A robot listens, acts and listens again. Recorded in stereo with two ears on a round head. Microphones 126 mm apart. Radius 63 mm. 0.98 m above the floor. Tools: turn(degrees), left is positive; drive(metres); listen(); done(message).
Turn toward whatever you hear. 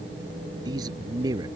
turn(degrees=-30)
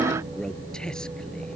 listen()
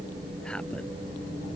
listen()
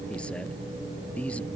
turn(degrees=10)
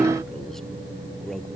listen()
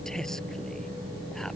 listen()
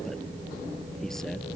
done("Facing where the man speaking came from. I can't hear it now.")